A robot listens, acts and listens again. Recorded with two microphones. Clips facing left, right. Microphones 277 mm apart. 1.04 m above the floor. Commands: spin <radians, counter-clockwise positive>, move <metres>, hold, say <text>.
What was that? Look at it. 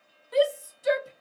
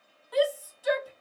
spin 0.44
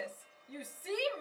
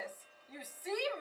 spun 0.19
spin 2.44
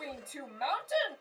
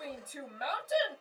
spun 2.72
spin -0.26
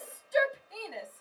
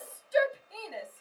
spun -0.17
say Found it: a shout, straight ahead, 1 to 2 m away.